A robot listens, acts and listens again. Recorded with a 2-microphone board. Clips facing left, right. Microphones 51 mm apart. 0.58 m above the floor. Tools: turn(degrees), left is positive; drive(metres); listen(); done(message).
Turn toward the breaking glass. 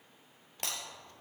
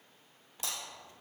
turn(degrees=60)
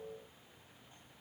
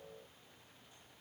listen()
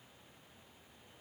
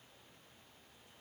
done("I heard breaking glass, but can't make it out now. It was about straight ahead or 60° left.")